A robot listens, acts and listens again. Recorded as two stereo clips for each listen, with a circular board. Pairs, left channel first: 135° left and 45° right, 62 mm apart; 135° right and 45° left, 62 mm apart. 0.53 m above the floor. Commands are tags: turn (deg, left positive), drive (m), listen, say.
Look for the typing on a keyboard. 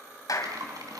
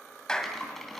<turn deg="-45"/>
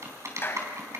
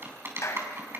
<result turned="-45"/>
<say>Found it: typing on a keyboard, straight ahead, 2 to 4 m away.</say>